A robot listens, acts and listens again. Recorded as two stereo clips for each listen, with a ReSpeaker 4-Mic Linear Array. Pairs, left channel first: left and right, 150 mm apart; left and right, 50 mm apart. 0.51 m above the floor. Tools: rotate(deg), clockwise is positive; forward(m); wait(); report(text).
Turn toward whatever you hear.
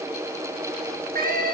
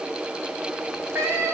rotate(65)
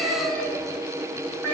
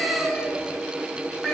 rotate(-10)
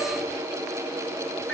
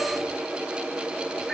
wait()
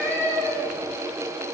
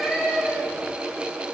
report("Facing the cat meowing.")